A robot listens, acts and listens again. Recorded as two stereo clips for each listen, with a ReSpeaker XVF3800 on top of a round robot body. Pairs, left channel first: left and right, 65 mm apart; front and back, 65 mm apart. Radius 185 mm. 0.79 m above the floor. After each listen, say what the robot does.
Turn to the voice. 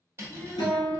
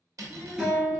Turn 130° left.
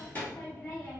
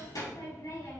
Turn 25° left.
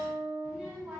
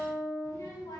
Turn 15° right.
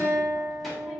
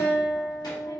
Keep listening.
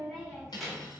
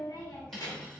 Found it: a child speaking, straight ahead.